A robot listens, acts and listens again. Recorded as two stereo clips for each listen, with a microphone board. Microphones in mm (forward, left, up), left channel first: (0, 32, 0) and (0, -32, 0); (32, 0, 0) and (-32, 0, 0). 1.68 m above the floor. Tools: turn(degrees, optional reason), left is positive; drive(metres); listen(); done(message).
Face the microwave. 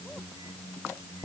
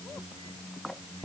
listen()
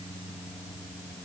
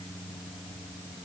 listen()
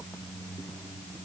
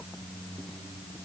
done("I can't make out a microwave to turn to.")